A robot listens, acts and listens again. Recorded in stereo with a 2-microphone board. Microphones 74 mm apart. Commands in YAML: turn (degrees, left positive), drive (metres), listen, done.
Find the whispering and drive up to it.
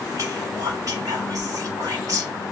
turn: -55
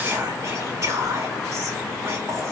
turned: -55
turn: -50
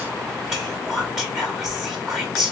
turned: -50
drive: 1.0
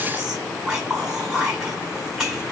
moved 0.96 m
drive: 1.0
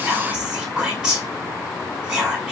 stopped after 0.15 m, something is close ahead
turn: -10
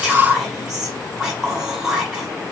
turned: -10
done: "I am next to the whispering."